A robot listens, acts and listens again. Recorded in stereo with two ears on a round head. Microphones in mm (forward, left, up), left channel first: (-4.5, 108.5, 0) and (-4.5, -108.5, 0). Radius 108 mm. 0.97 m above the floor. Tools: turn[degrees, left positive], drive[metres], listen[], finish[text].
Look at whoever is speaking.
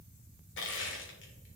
Action: listen[]
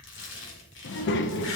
Thought: The child speaking: about 50° left or 130° left.
Action: turn[50]
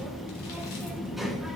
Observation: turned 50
Action: finish[Found it: a child speaking, straight ahead.]